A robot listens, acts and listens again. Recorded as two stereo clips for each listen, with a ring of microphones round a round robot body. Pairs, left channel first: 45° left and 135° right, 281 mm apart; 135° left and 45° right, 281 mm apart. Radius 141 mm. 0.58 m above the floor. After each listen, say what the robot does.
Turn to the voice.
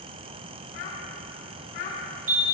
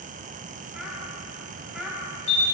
Turn 40° left.
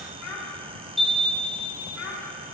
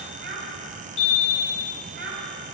Turn 10° left.
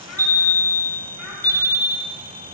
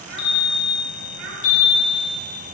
Keep listening.
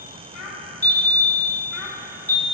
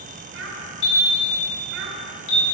Facing the child speaking.